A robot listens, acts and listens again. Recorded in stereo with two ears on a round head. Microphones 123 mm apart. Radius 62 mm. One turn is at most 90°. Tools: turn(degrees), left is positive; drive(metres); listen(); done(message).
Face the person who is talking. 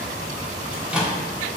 listen()
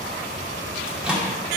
listen()
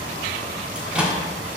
done("I can't make out anyone speaking, only a microwave.")